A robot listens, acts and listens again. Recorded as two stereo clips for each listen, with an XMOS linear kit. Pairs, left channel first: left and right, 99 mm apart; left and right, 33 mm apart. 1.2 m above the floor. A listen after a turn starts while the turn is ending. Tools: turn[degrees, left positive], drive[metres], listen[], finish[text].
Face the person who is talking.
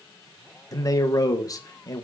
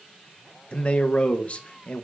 Thought: The man speaking: about 35° left or 145° left.
Action: turn[35]
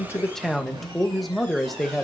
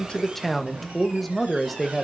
Action: finish[Facing the man speaking.]